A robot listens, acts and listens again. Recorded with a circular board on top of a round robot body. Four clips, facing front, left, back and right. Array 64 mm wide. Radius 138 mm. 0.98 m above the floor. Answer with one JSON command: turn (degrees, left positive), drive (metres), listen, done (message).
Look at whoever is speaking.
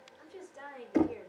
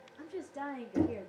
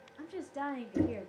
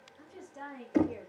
{"turn": 170}
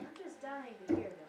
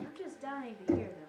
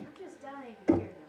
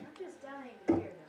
{"turn": 80}
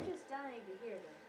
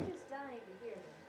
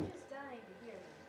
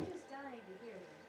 {"turn": 10}
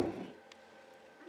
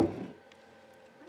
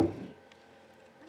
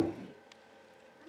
{"listen": true}
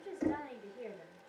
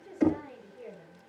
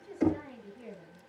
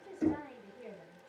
{"done": "Facing the woman speaking."}